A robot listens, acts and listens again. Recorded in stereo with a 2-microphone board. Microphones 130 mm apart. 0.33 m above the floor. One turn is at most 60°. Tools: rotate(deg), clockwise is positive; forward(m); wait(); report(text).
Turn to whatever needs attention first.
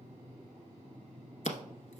wait()
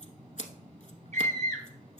rotate(60)
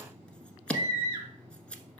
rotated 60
rotate(25)
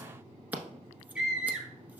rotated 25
report("Found it: a scream, straight ahead.")